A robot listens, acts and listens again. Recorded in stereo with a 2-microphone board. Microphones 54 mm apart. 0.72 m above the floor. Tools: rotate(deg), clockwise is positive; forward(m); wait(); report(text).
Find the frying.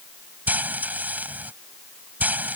rotate(35)
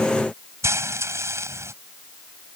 rotate(110)
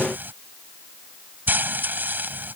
rotate(40)
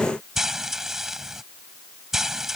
report("Facing the frying.")